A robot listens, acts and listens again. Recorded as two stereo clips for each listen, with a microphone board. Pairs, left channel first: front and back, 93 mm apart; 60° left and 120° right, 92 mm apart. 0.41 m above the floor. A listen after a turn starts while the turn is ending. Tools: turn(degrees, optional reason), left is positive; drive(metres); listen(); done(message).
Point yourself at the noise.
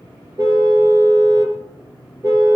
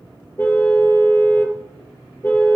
turn(degrees=125, reason="The car horn: 125° left.")
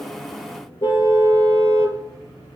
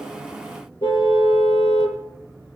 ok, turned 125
turn(degrees=30, reason="The car horn is now 30° left.")
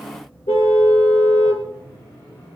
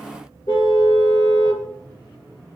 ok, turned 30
turn(degrees=15, reason="The car horn is now 15° left.")
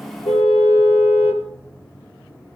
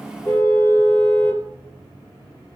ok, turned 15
done("Found it: a car horn, straight ahead, 2 to 4 m away.")